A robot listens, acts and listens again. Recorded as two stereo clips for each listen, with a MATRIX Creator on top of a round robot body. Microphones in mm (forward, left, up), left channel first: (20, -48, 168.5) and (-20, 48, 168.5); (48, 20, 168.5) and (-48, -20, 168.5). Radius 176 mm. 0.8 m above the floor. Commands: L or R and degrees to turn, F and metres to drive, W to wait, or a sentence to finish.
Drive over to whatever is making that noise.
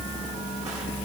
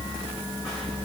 W
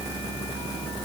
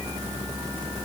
W
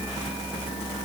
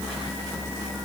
I can't make out anything to turn to.